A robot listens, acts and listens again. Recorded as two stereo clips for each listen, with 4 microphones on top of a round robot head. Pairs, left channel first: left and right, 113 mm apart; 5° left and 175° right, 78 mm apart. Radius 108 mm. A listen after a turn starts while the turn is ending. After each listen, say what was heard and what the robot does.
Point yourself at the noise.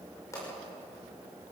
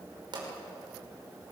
The pop: 160° left. Turn 160° left.
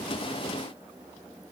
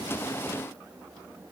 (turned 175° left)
Nothing new. It was at 15° right. Turn 15° right.
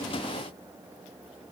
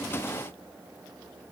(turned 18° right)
I heard a pop from this way, but can't make it out now.